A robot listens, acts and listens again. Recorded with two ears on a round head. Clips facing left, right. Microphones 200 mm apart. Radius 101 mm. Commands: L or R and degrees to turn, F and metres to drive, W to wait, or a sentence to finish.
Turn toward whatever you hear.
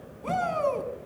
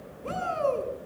L90
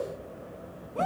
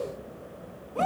Facing the shout.